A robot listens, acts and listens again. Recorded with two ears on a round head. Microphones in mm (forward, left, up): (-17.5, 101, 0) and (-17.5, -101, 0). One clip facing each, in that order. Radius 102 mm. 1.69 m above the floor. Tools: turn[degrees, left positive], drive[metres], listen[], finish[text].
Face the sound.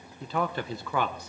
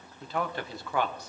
Thought: The man speaking: about 70° left or 110° left.
Action: turn[70]
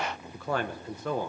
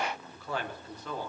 Thought: So it is at 40° left.
Action: turn[40]
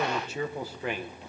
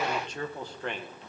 Action: finish[Found it: a man speaking, straight ahead, 1 to 2 m away.]